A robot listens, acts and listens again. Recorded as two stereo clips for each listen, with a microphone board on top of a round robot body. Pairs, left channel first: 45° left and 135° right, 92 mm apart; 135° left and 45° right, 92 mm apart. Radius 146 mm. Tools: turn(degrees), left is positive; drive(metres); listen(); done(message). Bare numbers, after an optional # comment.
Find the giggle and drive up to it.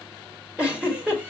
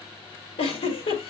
# The giggle: 145° left.
turn(145)
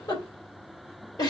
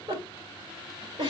drive(1.0)
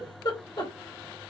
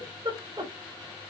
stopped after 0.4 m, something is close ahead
done("Something is in my way. I am facing the giggle but have not reached it.")